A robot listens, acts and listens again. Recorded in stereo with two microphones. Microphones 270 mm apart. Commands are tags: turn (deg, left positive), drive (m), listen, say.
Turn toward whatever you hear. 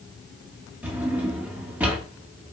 <turn deg="-30"/>
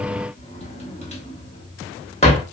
<turn deg="25"/>
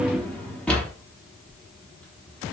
<say>Facing the drawer, under 1 m away.</say>